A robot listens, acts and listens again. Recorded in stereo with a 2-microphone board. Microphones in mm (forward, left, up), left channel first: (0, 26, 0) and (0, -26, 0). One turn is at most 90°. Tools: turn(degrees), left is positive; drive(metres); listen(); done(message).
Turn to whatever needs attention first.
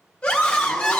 turn(degrees=20)
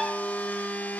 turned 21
listen()
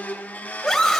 done("Found it: a scream, straight ahead.")